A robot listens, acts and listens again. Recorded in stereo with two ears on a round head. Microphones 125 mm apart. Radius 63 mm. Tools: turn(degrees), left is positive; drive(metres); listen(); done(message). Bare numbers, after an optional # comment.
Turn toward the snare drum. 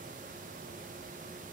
listen()
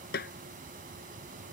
turn(90)
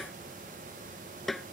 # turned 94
done("Facing the snare drum.")